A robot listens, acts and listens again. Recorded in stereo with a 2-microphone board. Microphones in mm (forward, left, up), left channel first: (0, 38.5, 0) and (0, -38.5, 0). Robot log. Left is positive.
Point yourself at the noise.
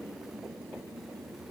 cmd idle
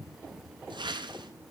cmd yaw -90
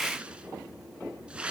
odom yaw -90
note: So it is at 15° right.
cmd yaw -15
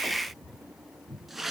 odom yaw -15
end: Facing the whoosh.